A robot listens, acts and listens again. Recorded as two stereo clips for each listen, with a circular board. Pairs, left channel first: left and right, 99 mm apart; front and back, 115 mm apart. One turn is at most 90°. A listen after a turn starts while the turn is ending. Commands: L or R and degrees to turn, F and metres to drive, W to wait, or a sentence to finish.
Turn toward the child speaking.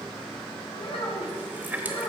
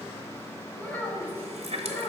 L70
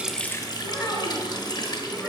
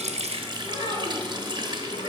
Facing the child speaking.